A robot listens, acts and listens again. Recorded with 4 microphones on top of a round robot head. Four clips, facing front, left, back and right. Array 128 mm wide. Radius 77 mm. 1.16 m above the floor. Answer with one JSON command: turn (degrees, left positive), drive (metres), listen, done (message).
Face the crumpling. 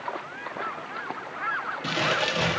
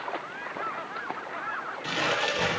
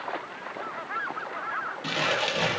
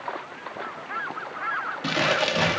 {"turn": -95}
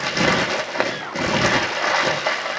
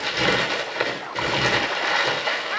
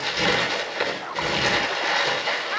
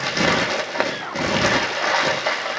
{"turn": -40}
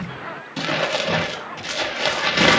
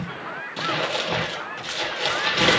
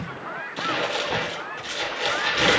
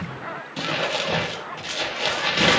{"done": "Facing the crumpling."}